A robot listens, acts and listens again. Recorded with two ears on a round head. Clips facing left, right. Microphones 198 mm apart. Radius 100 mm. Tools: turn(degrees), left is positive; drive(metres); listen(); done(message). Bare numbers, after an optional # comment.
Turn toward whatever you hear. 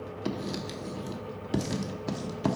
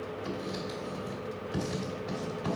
# The writing: about 60° left or 120° left.
turn(60)
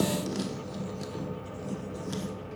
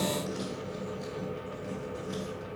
# So it is at 55° left.
turn(55)
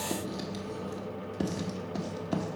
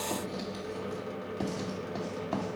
# The writing is now 20° left.
turn(20)
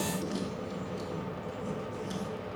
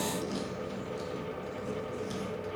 done("Found it: writing, straight ahead, 1 to 2 m away.")